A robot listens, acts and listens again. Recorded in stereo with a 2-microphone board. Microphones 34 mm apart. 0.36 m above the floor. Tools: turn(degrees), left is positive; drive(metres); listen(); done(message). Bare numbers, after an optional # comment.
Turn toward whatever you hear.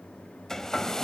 # The hair dryer: about 15° left or 165° left.
turn(15)
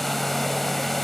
done("Found it: a hair dryer, straight ahead, 1 to 2 m away.")